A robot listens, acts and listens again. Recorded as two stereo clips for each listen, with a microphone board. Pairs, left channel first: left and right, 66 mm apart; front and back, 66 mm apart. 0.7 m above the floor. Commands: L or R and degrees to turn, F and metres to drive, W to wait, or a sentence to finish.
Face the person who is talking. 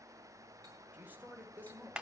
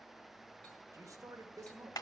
R150
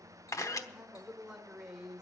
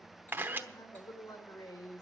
R10
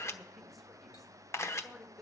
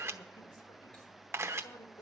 Facing the man speaking.